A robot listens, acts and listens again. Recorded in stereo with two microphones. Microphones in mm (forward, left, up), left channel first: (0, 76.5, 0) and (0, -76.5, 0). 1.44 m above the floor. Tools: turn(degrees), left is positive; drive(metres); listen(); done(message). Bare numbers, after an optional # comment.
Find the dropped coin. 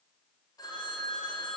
listen()
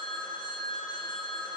listen()
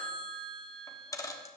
# The dropped coin: about 20° left or 160° left.
turn(20)
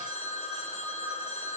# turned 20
listen()
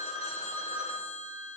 done("I heard a dropped coin, but can't make it out now. It was about straight ahead or 140° left.")